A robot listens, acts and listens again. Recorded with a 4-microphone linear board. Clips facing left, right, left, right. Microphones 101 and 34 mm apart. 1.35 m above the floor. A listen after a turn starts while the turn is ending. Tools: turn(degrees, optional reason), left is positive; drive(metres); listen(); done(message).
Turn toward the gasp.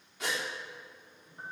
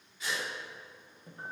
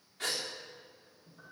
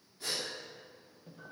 turn(degrees=75, reason="The gasp: about 75° left or 105° left.")
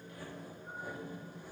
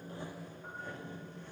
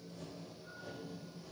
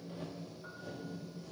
listen()
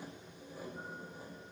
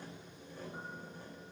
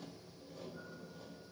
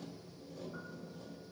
done("I heard a gasp, but can't make it out now. It was about straight ahead or 30° left.")